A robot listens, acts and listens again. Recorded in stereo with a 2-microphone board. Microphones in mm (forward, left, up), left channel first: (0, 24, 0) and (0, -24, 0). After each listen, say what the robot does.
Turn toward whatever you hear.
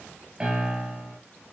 Turn 20° right.
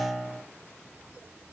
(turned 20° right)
Found it: a piano, straight ahead.